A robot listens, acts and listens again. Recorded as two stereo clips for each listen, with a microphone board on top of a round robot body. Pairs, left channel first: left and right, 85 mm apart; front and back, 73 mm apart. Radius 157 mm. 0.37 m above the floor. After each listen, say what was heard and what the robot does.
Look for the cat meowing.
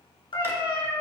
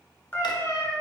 The cat meowing: 60° left. Turn 60° left.
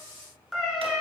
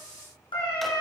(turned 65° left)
Found it: a cat meowing, straight ahead.